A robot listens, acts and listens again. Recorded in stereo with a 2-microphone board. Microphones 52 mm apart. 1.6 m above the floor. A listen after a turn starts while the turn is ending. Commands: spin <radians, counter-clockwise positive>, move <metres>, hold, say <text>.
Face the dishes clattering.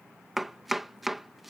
hold
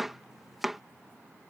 hold
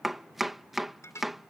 spin 1.22
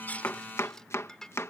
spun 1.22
spin 0.17
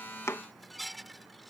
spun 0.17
say Found it: dishes clattering, straight ahead.